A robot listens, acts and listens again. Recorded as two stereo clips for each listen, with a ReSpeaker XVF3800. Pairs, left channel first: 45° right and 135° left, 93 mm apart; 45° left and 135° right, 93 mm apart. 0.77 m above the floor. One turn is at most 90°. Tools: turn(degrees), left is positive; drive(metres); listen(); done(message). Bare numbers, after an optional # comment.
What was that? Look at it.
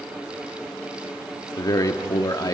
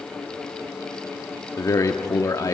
done("Facing the man speaking.")